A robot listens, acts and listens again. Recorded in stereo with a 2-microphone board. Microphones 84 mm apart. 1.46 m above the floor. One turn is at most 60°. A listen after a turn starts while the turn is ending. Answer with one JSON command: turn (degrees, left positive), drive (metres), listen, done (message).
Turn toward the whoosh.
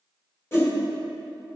{"turn": 30}
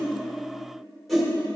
{"done": "Found it: a whoosh, straight ahead, 1 to 2 m away."}